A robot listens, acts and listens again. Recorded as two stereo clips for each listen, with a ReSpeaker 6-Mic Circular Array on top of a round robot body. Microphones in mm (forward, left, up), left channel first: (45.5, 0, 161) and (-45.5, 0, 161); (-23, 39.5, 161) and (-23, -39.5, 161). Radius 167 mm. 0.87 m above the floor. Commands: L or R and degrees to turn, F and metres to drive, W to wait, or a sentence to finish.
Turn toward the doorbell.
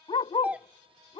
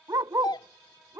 L105
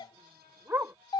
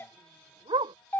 L30
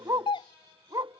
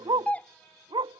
L20
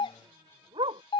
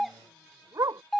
Found it: a doorbell, straight ahead.